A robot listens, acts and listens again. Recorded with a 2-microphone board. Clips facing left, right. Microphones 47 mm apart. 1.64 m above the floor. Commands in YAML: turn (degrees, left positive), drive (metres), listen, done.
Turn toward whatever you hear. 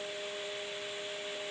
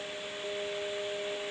listen: true
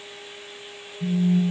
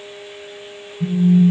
turn: -25
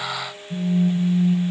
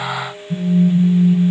done: "Found it: a phone buzzing, straight ahead, 2 to 4 m away."